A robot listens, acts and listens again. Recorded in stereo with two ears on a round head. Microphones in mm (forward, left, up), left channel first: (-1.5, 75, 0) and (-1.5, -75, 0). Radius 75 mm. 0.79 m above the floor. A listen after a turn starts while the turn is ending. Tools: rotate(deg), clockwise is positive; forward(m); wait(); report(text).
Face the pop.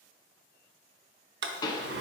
rotate(-25)
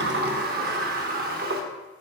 wait()
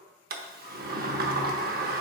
report("I heard a pop, but can't make it out now. It was about straight ahead or 130° left.")